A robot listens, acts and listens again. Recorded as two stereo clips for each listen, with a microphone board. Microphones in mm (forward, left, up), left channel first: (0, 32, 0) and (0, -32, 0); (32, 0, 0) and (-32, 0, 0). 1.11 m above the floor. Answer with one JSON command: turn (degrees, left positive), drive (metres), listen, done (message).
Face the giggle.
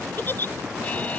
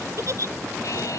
{"turn": 145}
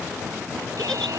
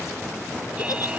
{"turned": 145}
{"listen": true}
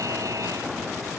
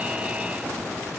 {"listen": true}
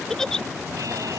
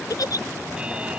{"turn": 10}
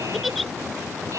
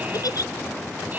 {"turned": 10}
{"done": "Found it: a giggle, straight ahead."}